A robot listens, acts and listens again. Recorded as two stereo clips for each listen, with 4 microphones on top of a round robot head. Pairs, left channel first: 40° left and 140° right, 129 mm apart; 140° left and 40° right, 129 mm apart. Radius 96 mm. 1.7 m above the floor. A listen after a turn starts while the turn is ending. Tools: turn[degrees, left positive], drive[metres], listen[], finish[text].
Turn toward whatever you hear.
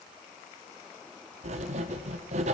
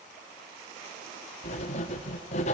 Thought: The writing: straight behind.
Action: turn[180]
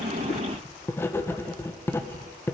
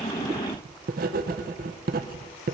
Thought: The writing is now 30° right.
Action: turn[-30]
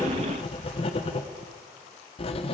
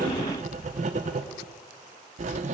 Action: finish[Found it: writing, straight ahead.]